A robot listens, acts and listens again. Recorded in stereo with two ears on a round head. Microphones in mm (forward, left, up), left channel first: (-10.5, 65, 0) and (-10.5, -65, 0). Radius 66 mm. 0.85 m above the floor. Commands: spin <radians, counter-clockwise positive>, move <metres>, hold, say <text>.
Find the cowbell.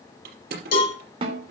spin 1.31
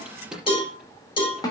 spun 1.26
spin 0.61
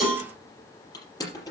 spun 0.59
say Found it: a cowbell, straight ahead, over 4 m away.